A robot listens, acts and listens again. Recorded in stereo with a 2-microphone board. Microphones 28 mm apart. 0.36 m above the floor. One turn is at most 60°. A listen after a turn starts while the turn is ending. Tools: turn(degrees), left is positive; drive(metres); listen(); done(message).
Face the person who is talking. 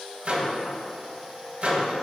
listen()
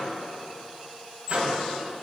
listen()
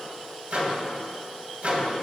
done("I can't make out anyone speaking, only a microwave.")